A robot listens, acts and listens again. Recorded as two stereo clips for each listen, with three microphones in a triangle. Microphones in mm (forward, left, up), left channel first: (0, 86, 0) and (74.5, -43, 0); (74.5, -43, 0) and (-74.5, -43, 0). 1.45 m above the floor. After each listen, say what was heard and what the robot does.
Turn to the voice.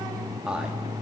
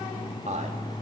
The man speaking: 145° right. Turn 145° right.
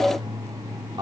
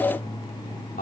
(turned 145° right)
Found it: a man speaking, straight ahead, 2 to 4 m away.